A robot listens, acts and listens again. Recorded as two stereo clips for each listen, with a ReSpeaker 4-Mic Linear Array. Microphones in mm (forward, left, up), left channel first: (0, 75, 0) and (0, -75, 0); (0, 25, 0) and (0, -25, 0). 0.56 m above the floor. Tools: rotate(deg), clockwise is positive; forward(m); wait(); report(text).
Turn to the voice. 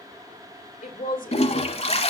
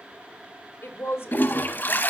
rotate(-65)
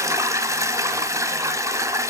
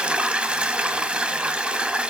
wait()
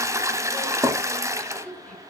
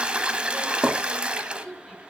rotate(-10)
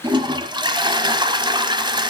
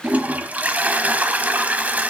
wait()
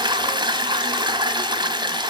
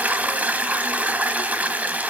wait()
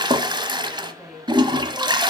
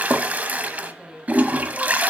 report("Facing the woman speaking.")